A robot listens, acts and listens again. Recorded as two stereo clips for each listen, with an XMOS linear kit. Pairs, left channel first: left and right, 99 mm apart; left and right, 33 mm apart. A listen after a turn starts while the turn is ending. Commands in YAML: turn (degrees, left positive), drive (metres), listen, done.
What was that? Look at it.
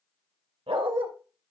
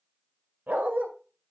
turn: -70
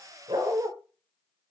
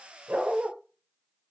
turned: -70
turn: -30
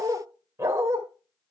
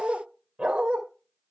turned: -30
turn: -30
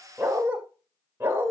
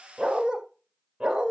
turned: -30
turn: -25
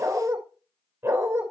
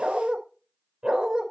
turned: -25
turn: -25
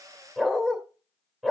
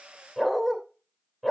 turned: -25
done: "Found it: a dog barking, straight ahead, 2 to 4 m away."